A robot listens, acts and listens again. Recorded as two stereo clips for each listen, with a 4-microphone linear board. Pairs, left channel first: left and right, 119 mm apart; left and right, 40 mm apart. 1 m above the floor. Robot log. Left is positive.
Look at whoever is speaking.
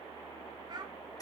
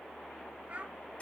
note: The child speaking: about 40° right or 140° right.
cmd yaw -40
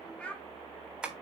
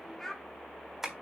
note: So it is at 10° left.
cmd yaw +10
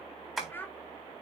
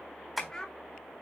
note: The child speaking is now 15° left.
cmd yaw +15
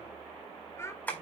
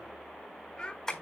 note: The child speaking is now 25° left.
cmd yaw +25
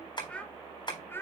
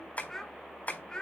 note: The child speaking is now 20° left.
cmd yaw +20
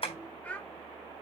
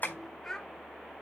note: The child speaking is now 10° left.
cmd yaw +10
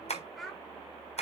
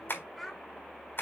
end: Facing the child speaking.